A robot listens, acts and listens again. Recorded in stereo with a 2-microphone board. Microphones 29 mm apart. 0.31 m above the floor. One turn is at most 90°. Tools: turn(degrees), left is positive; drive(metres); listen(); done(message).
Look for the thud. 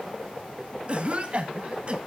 listen()
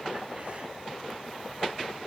listen()
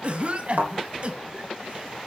turn(degrees=-90)
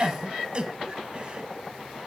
done("Facing where the thud came from. I can't hear it now.")